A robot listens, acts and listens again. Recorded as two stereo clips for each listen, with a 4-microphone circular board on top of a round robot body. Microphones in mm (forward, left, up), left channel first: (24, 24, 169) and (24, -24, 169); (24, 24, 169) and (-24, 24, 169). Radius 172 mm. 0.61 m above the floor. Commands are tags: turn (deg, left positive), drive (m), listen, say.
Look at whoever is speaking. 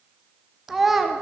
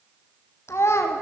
<say>Found it: a child speaking, straight ahead.</say>